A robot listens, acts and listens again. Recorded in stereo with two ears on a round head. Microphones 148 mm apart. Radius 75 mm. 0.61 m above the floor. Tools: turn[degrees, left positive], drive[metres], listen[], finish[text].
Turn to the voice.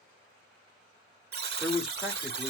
Action: turn[30]
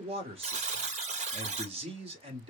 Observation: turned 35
Thought: So it is at 35° right.
Action: turn[-35]
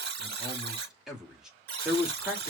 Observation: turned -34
Action: finish[Found it: a man speaking, straight ahead.]